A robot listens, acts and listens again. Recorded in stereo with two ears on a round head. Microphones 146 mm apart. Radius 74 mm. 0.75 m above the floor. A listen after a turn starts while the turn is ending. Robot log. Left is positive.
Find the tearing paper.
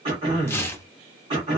note: The tearing paper: about 15° left or 165° left.
cmd yaw +15
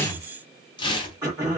note: So it is at 150° left.
cmd yaw +150
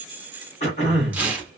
note: The tearing paper is now 10° right.
cmd yaw -10
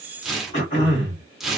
end: Found it: tearing paper, straight ahead.